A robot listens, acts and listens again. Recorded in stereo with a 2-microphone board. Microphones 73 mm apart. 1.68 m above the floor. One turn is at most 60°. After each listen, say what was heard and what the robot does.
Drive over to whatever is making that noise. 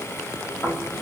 The snoring: about 50° left or 130° left. Turn 50° left.
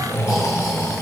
So it is at 75° left. Turn 60° left.
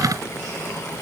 Nothing new. It was at 15° left. Turn 15° left.
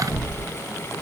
Drive 1.0 m forward.
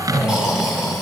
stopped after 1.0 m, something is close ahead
The snoring is now 10° right. Turn 10° right.
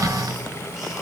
Keep listening.
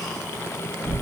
I am next to the snoring.